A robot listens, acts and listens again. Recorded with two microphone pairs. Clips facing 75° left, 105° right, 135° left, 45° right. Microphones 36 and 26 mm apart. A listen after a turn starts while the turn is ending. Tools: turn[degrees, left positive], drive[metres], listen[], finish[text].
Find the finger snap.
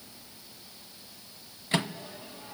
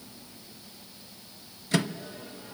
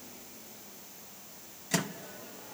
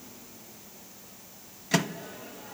Action: listen[]
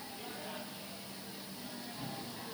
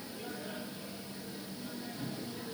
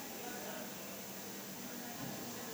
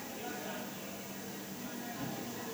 Action: listen[]
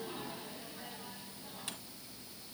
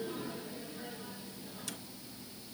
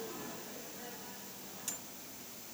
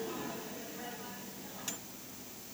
Action: finish[I can't make out a finger snap to turn to.]